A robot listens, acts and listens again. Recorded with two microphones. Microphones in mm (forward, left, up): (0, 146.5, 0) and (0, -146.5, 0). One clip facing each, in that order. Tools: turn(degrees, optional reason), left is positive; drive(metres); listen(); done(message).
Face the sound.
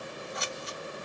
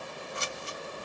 turn(degrees=-30, reason="The scissors: about 30° right or 150° right.")
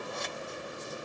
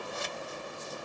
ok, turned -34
done("Facing the scissors.")